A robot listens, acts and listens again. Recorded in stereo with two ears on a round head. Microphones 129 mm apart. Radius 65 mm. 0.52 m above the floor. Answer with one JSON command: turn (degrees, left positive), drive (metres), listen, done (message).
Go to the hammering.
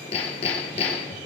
{"turn": 40}
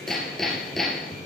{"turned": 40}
{"drive": 1.0}
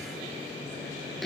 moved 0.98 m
{"drive": 1.0}
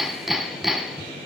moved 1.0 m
{"drive": 1.0}
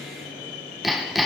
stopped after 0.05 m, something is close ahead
{"done": "I am next to the hammering."}